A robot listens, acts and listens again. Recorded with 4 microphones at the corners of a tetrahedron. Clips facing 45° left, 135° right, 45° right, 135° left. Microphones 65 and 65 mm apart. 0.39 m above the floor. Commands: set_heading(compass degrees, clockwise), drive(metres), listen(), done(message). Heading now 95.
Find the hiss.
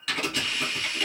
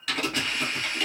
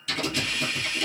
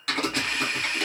set_heading(280)
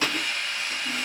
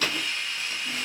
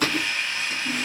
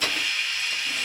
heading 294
set_heading(279)
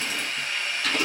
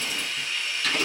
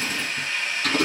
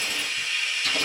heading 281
done("Facing the hiss, 1 to 2 m away.")